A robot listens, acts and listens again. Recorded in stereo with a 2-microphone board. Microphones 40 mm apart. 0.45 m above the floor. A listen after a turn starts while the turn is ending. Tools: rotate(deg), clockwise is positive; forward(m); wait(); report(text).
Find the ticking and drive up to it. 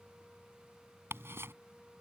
rotate(75)
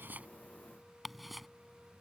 forward(1.0)
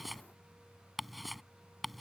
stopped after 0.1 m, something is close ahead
report("Something is in my way. I am facing the ticking but have not reached it.")